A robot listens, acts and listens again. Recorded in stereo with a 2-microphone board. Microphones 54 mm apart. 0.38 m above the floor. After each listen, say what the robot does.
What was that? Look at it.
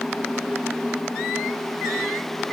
Keep listening.
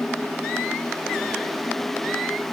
Keep listening.
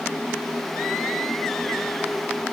I can't make out anything.